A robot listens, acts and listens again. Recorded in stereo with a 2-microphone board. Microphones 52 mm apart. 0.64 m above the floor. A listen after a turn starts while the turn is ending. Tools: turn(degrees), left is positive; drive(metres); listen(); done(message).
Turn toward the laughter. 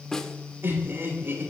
turn(degrees=-45)
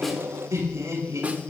turn(degrees=-100)
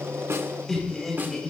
done("Found it: laughter, straight ahead, over 4 m away.")